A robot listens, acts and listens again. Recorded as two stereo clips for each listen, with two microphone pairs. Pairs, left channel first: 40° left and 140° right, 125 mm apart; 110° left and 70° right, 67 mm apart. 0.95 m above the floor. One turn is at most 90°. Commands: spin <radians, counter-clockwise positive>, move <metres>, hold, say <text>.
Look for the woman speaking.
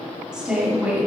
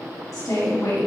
spin 1.57
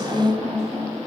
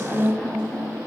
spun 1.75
spin 1.13
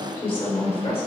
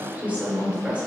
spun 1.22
say Facing the woman speaking, 2 to 4 m away.